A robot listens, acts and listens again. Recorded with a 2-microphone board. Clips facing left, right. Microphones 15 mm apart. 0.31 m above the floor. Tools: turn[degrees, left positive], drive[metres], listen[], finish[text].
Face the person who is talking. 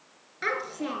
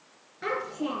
Thought: The child speaking: about 50° left or 130° left.
Action: turn[50]
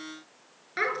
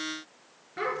Thought: So it is at 75° left.
Action: turn[75]
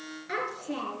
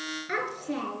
Thought: The child speaking is now 20° right.
Action: turn[-20]
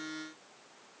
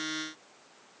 Action: listen[]
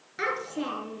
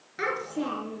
Action: finish[Found it: a child speaking, straight ahead.]